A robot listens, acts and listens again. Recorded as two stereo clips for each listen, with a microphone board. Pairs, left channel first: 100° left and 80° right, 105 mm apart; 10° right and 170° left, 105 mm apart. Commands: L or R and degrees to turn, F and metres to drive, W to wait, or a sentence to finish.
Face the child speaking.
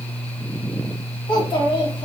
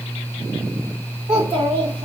L140
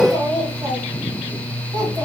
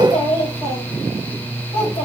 R30
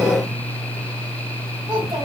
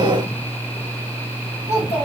R30
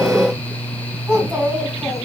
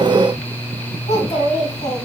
Facing the child speaking.